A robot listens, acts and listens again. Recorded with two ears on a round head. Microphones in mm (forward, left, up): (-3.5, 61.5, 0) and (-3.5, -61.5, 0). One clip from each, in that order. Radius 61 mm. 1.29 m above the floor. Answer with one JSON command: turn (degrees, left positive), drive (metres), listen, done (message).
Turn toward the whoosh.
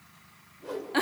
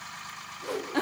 {"turn": -45}
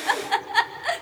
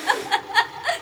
{"listen": true}
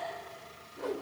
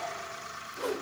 {"turn": -95}
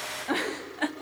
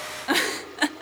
{"listen": true}
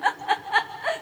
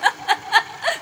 {"listen": true}
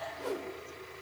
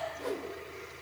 {"done": "Found it: a whoosh, straight ahead."}